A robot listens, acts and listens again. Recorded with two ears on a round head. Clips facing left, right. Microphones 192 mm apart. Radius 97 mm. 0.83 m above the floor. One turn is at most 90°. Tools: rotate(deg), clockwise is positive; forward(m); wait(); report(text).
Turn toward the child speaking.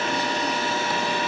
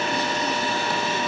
wait()
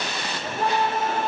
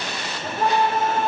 wait()
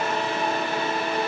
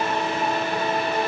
report("I can't make out a child speaking to turn to.")